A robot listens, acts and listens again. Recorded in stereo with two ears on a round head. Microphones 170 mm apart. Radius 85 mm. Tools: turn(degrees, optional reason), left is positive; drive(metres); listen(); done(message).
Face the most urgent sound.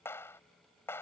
listen()
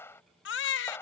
turn(degrees=65, reason="The baby crying: about 65° left or 115° left.")
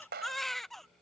done("Facing the baby crying.")